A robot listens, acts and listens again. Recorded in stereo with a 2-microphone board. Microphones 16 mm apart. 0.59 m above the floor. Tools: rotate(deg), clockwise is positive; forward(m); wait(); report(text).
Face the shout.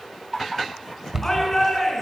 rotate(-15)
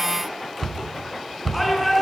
report("Facing the shout, over 4 m away.")